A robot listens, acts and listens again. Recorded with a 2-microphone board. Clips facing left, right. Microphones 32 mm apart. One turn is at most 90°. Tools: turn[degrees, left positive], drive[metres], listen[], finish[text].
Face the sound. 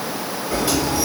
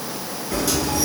Thought: The sliding door: about 25° left or 155° left.
Action: turn[25]
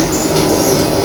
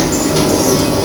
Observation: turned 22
Action: finish[Facing the sliding door.]